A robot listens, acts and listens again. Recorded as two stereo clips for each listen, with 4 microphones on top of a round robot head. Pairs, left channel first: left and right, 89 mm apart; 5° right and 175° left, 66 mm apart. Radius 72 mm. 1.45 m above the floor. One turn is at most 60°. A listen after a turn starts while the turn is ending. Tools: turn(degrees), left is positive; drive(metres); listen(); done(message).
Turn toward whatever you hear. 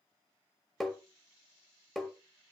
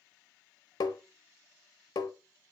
done("Facing the tapping, 1 to 2 m away.")